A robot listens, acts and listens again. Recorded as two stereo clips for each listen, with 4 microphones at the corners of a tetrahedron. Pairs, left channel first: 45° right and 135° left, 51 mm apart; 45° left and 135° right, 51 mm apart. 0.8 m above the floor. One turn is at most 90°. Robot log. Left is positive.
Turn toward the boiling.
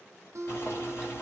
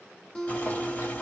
note: The boiling: 15° right.
cmd yaw -15
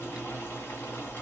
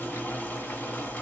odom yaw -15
note: The boiling is now 10° right.
cmd yaw -10
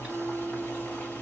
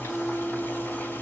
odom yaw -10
end: Found it: boiling, straight ahead.